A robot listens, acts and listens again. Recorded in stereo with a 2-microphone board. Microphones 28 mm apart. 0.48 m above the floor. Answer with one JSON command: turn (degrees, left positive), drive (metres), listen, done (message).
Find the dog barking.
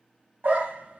{"turn": -90}
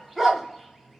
{"done": "Found it: a dog barking, straight ahead."}